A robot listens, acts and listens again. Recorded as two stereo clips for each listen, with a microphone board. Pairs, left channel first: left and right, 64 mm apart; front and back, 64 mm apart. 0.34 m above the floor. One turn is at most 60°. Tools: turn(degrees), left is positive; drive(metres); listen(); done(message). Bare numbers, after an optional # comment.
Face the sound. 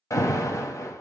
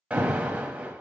# The alarm: 110° left.
turn(60)
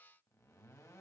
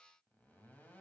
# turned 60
# Nothing new. It was at 50° left.
turn(50)
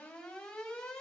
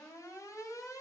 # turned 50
# The alarm is now 15° left.
turn(15)
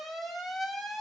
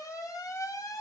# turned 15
done("Found it: an alarm, straight ahead, 1 to 2 m away.")